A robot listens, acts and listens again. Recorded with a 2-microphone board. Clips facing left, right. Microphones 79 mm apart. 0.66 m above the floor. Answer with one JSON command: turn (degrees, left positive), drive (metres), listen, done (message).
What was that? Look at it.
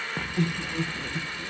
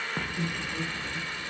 {"turn": 70}
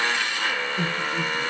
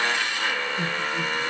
{"turn": 45}
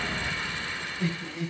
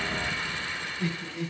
{"turn": 25}
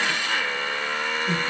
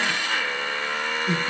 {"turn": -10}
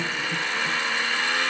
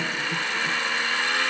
{"done": "Facing the laughter."}